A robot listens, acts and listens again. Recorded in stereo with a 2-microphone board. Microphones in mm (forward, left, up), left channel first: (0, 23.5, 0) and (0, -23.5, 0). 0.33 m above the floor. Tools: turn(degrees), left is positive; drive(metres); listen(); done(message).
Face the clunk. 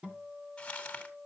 listen()
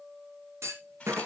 turn(degrees=-90)
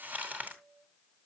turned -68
turn(degrees=-20)
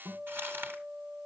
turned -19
done("I heard a clunk from this way, but can't make it out now.")